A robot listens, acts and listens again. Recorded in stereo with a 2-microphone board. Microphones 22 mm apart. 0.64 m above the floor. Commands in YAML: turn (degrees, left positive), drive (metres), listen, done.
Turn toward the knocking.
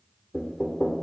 turn: 40
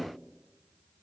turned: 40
listen: true
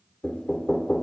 turn: 95
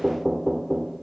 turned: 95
turn: -25
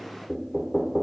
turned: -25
done: "Facing the knocking."